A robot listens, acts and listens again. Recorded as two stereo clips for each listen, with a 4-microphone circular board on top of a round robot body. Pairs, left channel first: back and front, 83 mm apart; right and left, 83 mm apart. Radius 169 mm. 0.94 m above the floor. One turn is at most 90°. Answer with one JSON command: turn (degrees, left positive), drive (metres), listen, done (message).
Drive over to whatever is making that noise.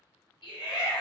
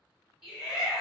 {"turn": 90}
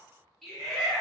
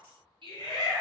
{"turn": 90}
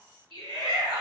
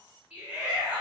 {"turn": 10}
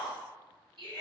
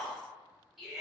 {"drive": 1.0}
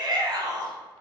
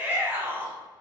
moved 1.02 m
{"turn": 20}
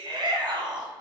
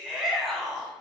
{"drive": 1.0}
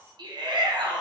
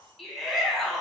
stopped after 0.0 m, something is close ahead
{"done": "I am next to the shout."}